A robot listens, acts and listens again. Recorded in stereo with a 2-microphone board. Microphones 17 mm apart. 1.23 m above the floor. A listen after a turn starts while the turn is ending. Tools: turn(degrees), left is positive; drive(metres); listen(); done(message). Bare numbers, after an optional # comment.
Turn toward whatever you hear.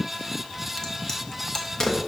# The crack: about 35° left or 145° left.
turn(35)
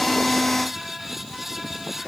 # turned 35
listen()
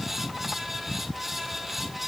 done("I heard a crack, but can't make it out now. It was about straight ahead or 110° left.")